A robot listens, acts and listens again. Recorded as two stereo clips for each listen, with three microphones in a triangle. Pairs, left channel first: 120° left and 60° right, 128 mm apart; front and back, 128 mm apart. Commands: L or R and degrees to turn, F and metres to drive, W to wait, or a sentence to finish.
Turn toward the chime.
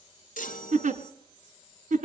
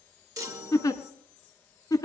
L115
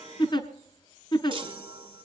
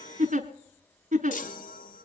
Facing the chime, 1 to 2 m away.